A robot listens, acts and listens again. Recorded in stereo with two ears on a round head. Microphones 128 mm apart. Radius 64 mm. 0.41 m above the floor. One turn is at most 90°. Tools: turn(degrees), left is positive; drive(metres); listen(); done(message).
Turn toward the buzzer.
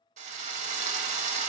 listen()
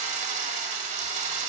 listen()
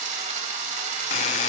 turn(degrees=50)
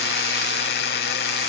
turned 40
turn(degrees=90)
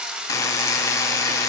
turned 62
turn(degrees=25)
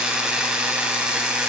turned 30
done("Found it: a buzzer, straight ahead.")